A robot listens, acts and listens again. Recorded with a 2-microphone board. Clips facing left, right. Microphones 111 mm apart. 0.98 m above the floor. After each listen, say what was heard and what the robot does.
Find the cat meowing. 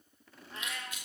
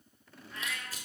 The cat meowing: about 30° left or 150° left. Turn 30° left.
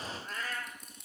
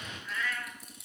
The cat meowing: about 35° left or 145° left. Turn 35° left.
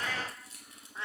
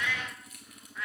The cat meowing: about 30° left or 150° left. Turn 30° left.
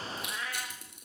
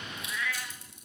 The cat meowing: about 35° left or 145° left. Turn 35° left.
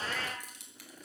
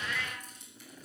So it is at 135° left. Turn 135° left.
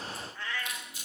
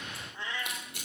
The cat meowing is now 20° right. Turn 20° right.
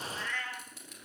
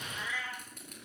Found it: a cat meowing, straight ahead.